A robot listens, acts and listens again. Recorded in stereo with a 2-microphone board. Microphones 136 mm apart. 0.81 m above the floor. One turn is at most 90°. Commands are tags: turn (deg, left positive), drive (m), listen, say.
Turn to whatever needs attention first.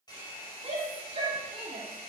<turn deg="-50"/>
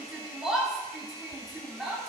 <say>Facing the shout, 2 to 4 m away.</say>